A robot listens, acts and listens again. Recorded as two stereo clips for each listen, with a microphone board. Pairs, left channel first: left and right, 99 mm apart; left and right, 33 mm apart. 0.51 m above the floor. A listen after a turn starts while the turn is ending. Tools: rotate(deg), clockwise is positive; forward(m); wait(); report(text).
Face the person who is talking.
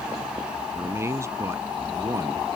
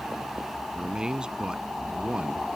rotate(35)
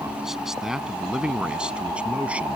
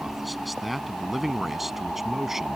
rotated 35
rotate(15)
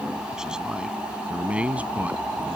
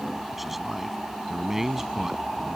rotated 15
rotate(15)
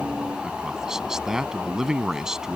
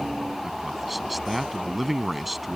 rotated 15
report("Facing the man speaking.")